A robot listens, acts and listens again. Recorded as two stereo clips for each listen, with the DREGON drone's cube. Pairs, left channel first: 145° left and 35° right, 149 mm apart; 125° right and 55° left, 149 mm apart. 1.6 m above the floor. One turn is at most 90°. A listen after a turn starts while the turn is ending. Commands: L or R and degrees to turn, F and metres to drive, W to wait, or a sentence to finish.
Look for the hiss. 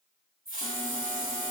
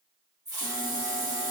R10
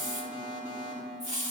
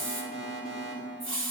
Found it: a hiss, straight ahead.